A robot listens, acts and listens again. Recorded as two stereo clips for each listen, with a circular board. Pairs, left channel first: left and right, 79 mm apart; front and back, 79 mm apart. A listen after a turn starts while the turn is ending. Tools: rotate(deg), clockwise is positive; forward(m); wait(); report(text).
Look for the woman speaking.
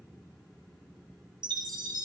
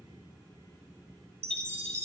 wait()
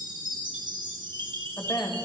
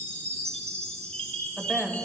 rotate(-90)
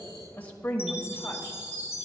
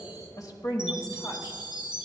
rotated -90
rotate(-25)
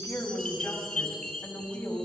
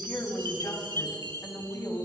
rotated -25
rotate(-20)
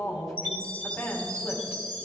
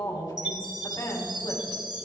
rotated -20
report("Found it: a woman speaking, straight ahead, 2 to 4 m away.")